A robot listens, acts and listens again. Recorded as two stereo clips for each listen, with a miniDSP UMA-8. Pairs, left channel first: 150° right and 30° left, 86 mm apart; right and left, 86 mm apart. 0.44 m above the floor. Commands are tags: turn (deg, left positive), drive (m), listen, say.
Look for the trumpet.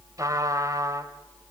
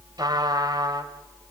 <turn deg="70"/>
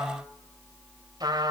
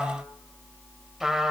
<say>Facing the trumpet, 2 to 4 m away.</say>